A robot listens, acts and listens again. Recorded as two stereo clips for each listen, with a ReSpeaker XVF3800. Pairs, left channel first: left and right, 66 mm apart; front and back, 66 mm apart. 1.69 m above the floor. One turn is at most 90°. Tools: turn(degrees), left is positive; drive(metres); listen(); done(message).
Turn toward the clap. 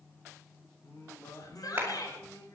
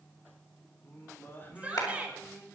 turn(degrees=-25)
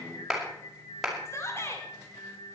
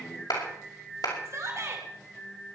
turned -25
done("Facing the clap, over 4 m away.")